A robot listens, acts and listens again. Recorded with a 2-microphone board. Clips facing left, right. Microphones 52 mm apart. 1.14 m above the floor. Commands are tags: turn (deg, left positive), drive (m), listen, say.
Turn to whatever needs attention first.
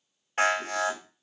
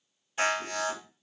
<turn deg="55"/>
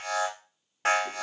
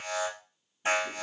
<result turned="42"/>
<turn deg="80"/>
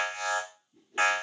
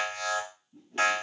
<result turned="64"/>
<turn deg="15"/>
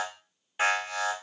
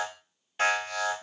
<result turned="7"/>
<turn deg="10"/>
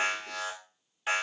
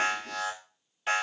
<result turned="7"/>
<say>Found it: an alarm, straight ahead.</say>